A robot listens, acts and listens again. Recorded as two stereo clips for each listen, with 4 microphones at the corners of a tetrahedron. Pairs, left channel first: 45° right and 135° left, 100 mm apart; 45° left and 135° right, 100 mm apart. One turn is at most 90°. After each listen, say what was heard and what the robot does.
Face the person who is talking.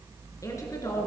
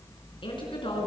The woman speaking: 10° left. Turn 10° left.
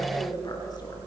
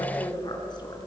Found it: a woman speaking, straight ahead.